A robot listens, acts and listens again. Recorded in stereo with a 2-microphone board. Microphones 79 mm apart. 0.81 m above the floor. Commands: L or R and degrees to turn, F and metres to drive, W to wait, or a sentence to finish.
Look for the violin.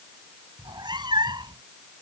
W
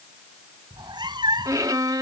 R50
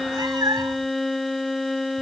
Facing the violin.